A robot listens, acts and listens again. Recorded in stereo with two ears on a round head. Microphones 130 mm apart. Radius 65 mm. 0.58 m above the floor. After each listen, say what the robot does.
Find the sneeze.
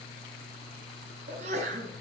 Turn 55° right.
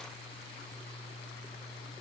Keep listening.
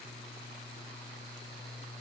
I heard a sneeze, but can't make it out now. It was about straight ahead or 70° right.